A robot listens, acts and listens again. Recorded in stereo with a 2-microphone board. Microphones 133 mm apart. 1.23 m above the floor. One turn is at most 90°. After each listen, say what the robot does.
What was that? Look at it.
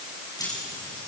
Turn 30° left.
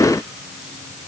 Keep listening.
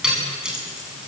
Facing the keys jangling.